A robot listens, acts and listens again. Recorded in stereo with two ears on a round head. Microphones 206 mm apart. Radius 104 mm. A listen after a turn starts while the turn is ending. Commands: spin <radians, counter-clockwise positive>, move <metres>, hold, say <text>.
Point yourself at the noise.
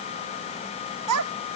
spin -1.57
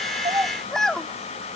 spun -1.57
say Facing the child speaking.